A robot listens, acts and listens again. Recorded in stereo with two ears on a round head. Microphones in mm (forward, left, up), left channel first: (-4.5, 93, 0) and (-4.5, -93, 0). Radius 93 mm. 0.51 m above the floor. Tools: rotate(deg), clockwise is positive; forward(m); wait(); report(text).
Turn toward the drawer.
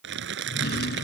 rotate(-50)
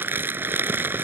wait()
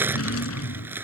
rotate(-75)
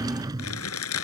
rotate(20)
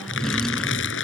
report("Found it: a drawer, straight ahead.")